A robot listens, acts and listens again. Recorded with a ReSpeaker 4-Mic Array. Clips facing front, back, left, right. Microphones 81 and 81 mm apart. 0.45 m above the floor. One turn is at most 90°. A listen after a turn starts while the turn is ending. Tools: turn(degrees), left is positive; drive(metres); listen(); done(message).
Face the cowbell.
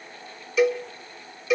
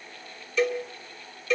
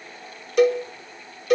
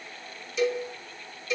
turn(degrees=80)
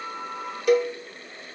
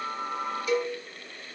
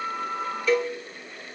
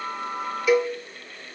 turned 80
turn(degrees=-15)
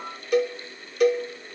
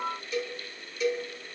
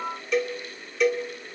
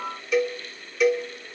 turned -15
done("Facing the cowbell.")